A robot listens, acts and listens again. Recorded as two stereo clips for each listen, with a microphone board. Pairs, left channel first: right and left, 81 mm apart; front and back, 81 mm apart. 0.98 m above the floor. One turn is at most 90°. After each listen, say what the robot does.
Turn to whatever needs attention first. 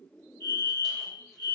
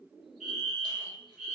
Turn 90° left.
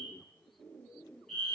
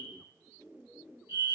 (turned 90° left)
Found it: a fire alarm, straight ahead, 2 to 4 m away.